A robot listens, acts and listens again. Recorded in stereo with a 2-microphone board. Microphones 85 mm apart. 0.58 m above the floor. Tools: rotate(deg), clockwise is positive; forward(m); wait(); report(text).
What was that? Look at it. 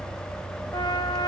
rotate(-55)
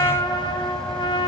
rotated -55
rotate(-75)
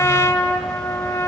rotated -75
rotate(-35)
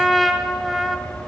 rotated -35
report("Found it: a trumpet, straight ahead.")